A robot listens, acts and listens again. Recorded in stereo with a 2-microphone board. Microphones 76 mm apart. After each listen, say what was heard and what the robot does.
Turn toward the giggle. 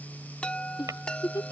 The giggle: about 65° left or 115° left. Turn 65° left.
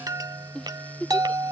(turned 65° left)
So it is at 10° left. Turn 10° left.
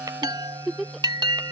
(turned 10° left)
Found it: a giggle, straight ahead.